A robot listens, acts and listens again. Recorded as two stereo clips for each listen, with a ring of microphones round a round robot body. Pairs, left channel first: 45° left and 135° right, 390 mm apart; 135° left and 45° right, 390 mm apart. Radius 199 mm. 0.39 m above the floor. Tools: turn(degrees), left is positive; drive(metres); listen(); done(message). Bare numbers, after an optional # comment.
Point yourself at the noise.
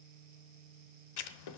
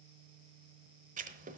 # The writing: 25° left.
turn(25)
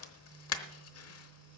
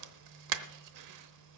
done("Facing the writing, under 1 m away.")